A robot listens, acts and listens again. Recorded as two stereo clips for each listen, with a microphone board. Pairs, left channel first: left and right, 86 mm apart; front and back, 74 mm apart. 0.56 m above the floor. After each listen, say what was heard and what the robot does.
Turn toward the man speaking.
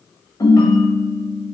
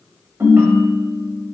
Keep listening.
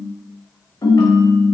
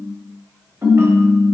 Keep listening.
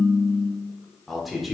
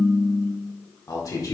Found it: a man speaking, straight ahead.